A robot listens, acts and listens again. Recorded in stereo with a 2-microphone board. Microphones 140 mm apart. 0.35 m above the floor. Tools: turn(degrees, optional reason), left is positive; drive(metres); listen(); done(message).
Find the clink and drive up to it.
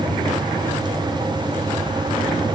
listen()
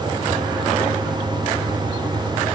listen()
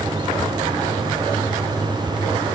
done("I can't make out a clink to turn to.")